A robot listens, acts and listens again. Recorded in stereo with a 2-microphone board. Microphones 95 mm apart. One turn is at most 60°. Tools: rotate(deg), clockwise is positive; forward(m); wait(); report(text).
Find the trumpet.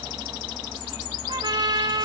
rotate(60)
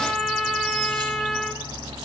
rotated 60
report("Facing the trumpet, 1 to 2 m away.")